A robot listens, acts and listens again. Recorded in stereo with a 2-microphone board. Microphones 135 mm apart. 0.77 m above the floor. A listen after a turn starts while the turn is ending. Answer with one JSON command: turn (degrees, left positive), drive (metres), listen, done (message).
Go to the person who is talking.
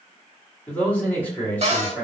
{"turn": 30}
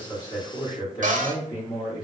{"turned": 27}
{"turn": 140}
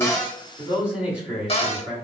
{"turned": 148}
{"turn": -10}
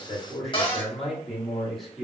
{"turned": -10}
{"drive": 1.0}
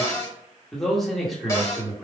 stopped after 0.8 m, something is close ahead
{"done": "I am next to the man speaking."}